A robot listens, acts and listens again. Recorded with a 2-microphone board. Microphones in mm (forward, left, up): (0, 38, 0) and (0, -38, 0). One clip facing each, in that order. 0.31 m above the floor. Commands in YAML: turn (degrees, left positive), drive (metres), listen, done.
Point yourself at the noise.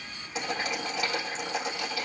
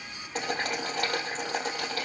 turn: -50
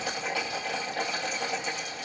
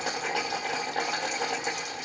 turn: -80
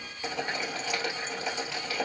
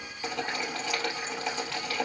done: "Facing the boiling."